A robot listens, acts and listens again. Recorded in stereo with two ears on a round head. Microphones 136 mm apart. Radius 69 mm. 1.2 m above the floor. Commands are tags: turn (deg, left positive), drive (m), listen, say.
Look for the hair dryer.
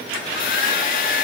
<turn deg="65"/>
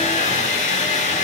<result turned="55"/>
<turn deg="50"/>
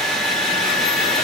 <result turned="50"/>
<say>Found it: a hair dryer, straight ahead, 1 to 2 m away.</say>